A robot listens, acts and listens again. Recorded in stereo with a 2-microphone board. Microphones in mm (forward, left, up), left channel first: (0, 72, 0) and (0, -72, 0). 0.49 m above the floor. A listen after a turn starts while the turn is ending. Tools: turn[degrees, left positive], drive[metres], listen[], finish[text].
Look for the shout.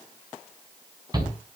Thought: The shout: about 30° right or 150° right.
Action: turn[-30]
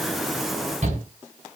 Thought: So it is at 120° right.
Action: turn[-120]
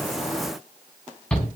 Action: finish[Facing the shout.]